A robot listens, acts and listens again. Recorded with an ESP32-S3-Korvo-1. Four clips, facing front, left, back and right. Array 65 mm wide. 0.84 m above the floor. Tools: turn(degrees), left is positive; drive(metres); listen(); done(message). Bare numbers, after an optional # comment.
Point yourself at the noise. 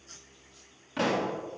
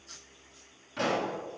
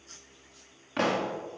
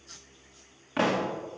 # The pop: 125° right.
turn(-125)
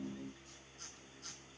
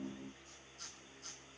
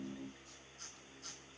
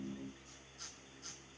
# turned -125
done("I heard a pop from this way, but can't make it out now.")